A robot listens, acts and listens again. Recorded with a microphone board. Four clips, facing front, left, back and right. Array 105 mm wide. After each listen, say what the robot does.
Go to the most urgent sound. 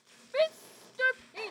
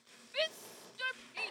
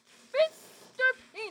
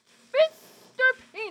Turn 95° right.
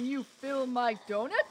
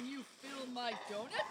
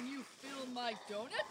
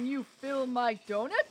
Turn 45° right.
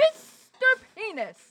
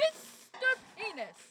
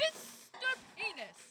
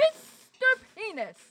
Turn 25° right.
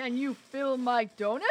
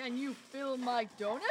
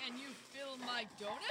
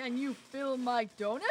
Turn 10° right.
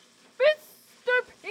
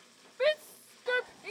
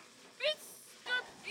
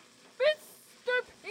Drive 1.0 m forward.
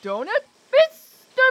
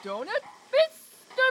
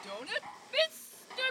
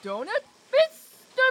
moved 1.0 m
Drive 1.0 m forward.
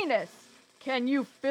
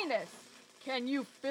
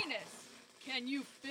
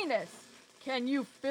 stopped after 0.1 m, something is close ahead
Turn 10° right.
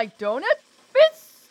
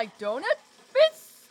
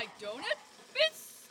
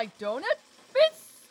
Arrived at the shout, straight ahead.